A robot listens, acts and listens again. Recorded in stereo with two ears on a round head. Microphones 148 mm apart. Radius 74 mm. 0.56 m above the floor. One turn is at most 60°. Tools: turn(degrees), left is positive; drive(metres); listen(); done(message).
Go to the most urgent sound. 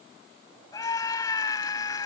turn(degrees=20)
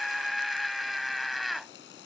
drive(metres=1.0)
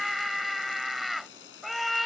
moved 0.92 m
drive(metres=1.0)
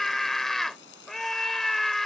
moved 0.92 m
drive(metres=1.0)
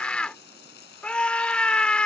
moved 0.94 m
drive(metres=1.0)
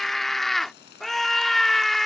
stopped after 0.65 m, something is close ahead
done("Arrived at the scream, straight ahead.")